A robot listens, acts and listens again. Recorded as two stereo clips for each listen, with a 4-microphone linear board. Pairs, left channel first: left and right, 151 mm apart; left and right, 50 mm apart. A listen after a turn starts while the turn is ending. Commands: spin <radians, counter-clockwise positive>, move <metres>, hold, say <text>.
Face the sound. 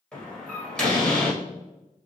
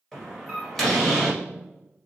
spin 0.52
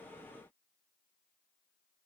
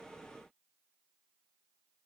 hold
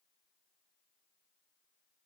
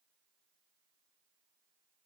say I heard a door slam, but can't make it out now. It was about 25° right or 145° left.